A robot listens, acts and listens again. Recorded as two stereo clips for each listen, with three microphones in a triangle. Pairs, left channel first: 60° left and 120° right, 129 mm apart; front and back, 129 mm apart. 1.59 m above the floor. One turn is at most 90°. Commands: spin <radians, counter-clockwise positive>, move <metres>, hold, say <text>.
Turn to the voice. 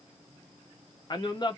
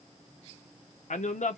say Found it: a man speaking, straight ahead.